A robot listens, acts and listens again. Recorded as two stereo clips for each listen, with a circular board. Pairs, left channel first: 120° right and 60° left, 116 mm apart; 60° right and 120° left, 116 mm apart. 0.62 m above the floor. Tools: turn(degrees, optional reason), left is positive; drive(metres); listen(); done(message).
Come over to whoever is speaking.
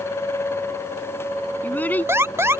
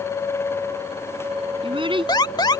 turn(degrees=165, reason="The child speaking: 165° left.")
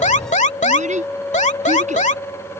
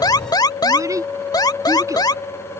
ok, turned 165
turn(degrees=55, reason="The child speaking is now 55° left.")
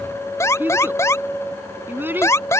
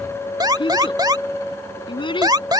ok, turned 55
turn(degrees=-15, reason="The child speaking is now 15° right.")
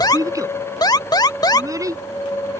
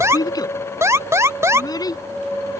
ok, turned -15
drive(metres=1.0)
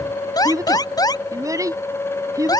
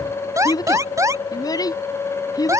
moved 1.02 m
drive(metres=1.0)
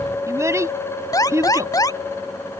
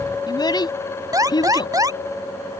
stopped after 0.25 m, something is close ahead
done("Something is in my way. I am facing the child speaking but have not reached it.")